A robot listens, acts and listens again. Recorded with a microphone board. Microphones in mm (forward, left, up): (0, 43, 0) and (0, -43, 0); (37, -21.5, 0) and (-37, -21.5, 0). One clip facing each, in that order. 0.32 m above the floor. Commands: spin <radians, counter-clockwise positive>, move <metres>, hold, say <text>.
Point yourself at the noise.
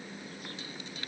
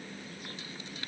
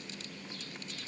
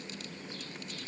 hold
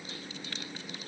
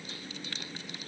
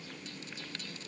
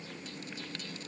hold
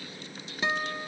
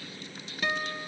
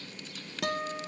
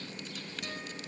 spin 0.35
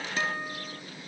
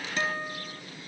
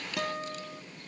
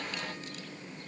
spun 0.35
say Facing the guitar.